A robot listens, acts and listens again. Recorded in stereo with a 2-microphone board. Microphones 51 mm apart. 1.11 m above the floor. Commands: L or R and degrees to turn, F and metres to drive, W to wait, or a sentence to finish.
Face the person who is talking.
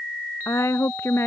L60
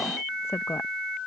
L60
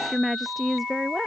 Found it: a woman speaking, straight ahead.